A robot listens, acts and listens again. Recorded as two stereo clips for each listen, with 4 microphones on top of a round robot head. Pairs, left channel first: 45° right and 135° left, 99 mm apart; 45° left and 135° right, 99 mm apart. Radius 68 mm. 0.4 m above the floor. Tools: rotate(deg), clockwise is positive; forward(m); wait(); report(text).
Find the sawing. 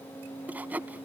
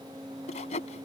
rotate(-60)
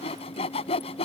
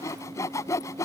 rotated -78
rotate(15)
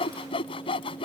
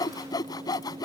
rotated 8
rotate(10)
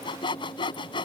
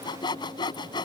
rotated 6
report("Found it: sawing, straight ahead.")